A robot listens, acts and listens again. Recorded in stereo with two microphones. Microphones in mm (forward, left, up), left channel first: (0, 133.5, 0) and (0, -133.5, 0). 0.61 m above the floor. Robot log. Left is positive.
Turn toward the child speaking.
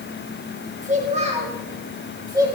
cmd yaw -30
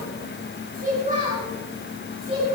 note: The child speaking: about 20° right or 160° right.
cmd yaw -20
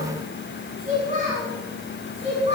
note: The child speaking: about 25° right or 155° right.
cmd yaw -25
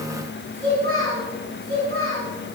note: So it is at 130° right.
cmd yaw -130
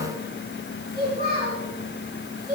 note: The child speaking is now 35° right.
cmd yaw -35
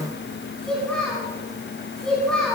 end: Found it: a child speaking, straight ahead.